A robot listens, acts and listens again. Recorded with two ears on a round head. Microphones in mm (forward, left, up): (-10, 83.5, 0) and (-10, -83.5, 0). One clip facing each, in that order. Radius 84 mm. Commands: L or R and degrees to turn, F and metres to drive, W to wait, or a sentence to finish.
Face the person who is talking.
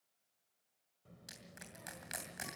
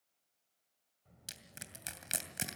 L70
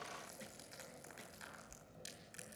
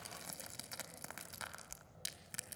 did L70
L35
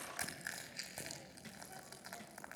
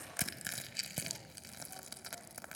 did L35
L15
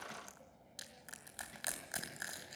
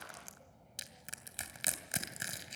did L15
Found it: a child speaking, straight ahead.